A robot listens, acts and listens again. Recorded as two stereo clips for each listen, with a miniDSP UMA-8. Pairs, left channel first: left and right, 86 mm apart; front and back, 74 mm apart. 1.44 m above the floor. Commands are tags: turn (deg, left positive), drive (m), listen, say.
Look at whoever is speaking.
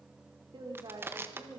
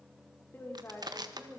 <turn deg="-65"/>
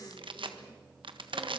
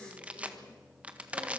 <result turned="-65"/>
<listen/>
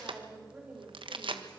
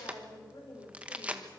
<turn deg="-25"/>
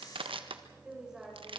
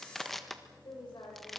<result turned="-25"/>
<say>Facing the woman speaking, over 4 m away.</say>